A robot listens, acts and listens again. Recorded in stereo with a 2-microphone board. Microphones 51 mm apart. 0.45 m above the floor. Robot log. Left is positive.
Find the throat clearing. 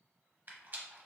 cmd idle
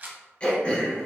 note: The throat clearing: about 25° left or 155° left.
cmd yaw +25
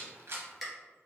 end: Facing the throat clearing.